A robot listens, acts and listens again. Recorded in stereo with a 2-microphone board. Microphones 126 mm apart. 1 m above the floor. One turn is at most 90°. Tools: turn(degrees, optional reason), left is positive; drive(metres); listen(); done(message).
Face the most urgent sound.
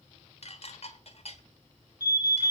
turn(degrees=30, reason="The alarm: about 30° left or 150° left.")
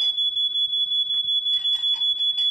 done("Found it: an alarm, straight ahead.")